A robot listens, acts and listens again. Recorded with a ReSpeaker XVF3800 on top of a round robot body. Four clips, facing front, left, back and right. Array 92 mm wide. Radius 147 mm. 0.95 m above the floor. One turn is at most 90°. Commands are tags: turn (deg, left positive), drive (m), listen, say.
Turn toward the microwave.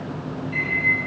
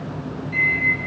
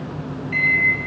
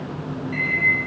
<turn deg="-90"/>
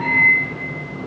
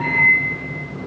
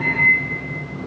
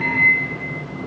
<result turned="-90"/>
<turn deg="-90"/>
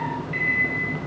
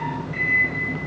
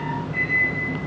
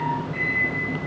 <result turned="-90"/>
<turn deg="20"/>
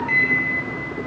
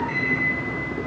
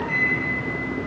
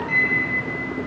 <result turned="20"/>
<say>Facing the microwave.</say>